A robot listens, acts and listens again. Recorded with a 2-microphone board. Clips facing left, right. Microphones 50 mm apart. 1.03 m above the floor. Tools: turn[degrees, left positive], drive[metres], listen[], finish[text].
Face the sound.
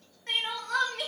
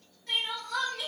Thought: The crying: about 50° left or 130° left.
Action: turn[50]
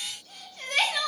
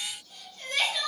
Thought: So it is at 70° left.
Action: turn[70]
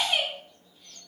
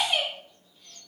Action: finish[Found it: crying, straight ahead, 1 to 2 m away.]